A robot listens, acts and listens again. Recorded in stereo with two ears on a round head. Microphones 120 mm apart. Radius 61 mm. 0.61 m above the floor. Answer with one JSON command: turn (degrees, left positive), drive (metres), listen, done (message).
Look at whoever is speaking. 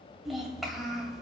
{"turn": 30}
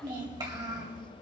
{"turn": -30}
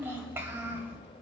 {"turn": -15}
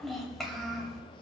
{"done": "Facing the child speaking."}